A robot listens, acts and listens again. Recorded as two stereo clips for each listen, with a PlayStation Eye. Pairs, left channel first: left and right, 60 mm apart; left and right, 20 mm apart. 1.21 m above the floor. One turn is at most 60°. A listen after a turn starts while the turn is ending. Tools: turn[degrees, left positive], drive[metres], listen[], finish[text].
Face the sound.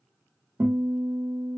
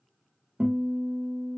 Thought: The guitar: about 55° right or 125° right.
Action: turn[-55]
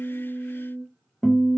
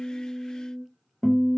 Action: finish[Facing the guitar.]